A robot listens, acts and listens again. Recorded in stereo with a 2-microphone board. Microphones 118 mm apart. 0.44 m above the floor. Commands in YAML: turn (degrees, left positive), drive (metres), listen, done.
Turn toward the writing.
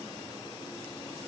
listen: true
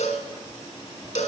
turn: -50
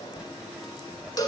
turn: -10
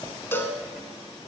done: "Facing the writing."